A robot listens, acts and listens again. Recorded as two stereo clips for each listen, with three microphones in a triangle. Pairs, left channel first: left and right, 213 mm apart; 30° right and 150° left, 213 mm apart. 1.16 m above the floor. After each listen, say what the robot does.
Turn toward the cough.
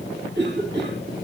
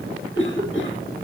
Turn 55° right.
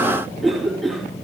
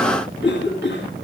Found it: a cough, straight ahead, 2 to 4 m away.